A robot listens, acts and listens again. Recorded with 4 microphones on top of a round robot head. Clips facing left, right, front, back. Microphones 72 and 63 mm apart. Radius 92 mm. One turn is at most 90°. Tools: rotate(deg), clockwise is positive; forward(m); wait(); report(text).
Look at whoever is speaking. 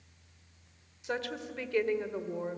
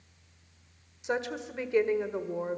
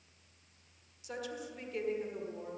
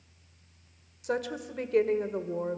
rotate(90)
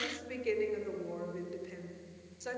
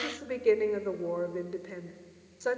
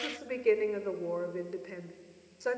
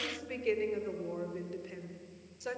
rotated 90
rotate(55)
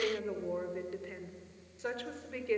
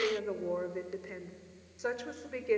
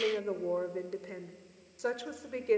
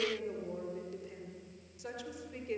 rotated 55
rotate(20)
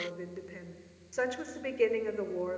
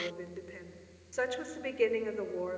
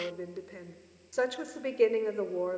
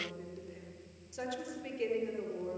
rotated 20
report("Facing the woman speaking, 1 to 2 m away.")